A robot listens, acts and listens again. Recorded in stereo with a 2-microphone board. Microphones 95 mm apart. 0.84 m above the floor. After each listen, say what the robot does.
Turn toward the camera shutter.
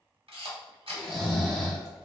Turn 90° right.
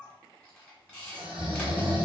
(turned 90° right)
Turn 10° left.
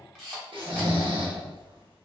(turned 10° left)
Facing the camera shutter.